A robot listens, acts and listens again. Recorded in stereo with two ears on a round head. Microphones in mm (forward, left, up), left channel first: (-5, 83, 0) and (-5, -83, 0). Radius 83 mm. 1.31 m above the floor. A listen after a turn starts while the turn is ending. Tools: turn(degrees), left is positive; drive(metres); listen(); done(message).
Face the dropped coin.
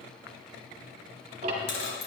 turn(degrees=55)
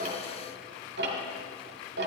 listen()
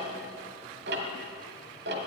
done("I heard a dropped coin, but can't make it out now. It was about straight ahead or 70° left.")